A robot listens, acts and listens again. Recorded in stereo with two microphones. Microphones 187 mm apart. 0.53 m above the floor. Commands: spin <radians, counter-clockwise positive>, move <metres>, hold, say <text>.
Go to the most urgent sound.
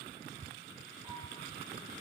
hold
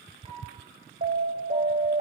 spin -1.13
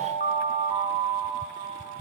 spin -0.79
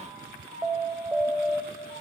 spin -0.17
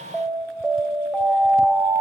move 1.0
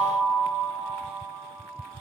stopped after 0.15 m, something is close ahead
say Something is in my way. I am facing the alarm but have not reached it.